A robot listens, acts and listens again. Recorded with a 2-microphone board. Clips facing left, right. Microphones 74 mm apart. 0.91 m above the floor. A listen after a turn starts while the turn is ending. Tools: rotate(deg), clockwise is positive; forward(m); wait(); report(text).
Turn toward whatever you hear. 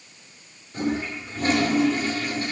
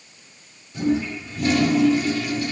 rotate(-40)
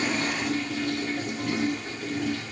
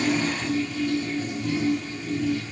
rotate(-100)
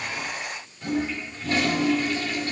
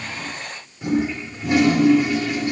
rotate(15)
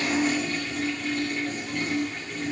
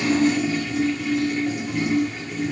report("Found it: a toilet flushing, straight ahead.")